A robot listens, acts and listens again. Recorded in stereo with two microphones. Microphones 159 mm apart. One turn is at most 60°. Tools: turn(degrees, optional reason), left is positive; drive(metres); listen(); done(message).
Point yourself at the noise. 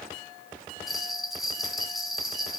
turn(degrees=30)
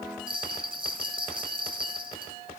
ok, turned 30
turn(degrees=-30, reason="So it is at 30° right.")
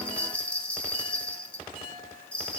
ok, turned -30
done("Found it: a bell, straight ahead, 2 to 4 m away.")